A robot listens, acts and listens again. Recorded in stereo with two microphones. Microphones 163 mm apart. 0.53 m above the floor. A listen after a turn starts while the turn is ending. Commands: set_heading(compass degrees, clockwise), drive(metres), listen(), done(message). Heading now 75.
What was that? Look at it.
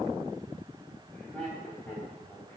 set_heading(45)
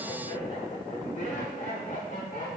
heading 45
set_heading(285)
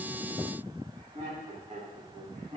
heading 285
set_heading(330)
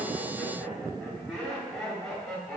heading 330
done("Found it: laughter, straight ahead, 2 to 4 m away.")